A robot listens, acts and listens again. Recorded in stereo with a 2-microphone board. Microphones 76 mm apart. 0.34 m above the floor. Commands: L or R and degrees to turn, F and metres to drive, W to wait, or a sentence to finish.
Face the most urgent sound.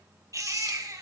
R45
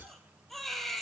Found it: a baby crying, straight ahead, 2 to 4 m away.